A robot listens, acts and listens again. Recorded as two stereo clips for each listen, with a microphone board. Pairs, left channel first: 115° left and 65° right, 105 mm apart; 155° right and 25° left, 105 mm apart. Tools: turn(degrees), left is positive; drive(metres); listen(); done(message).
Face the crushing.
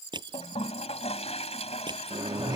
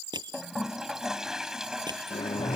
turn(degrees=-25)
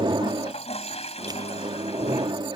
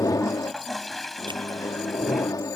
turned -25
listen()
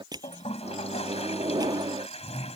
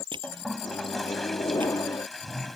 turn(degrees=-20)
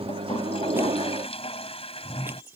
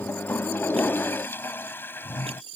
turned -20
listen()
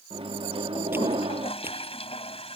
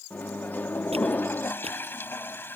listen()
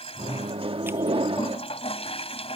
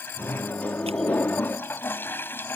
done("Facing where the crushing came from. I can't hear it now.")